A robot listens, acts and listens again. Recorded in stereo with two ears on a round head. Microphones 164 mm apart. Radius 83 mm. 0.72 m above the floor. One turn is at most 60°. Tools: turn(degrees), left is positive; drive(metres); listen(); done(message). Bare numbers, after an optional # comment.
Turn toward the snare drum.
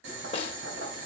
# The snare drum: about 30° left or 150° left.
turn(30)
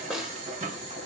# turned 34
done("Facing the snare drum.")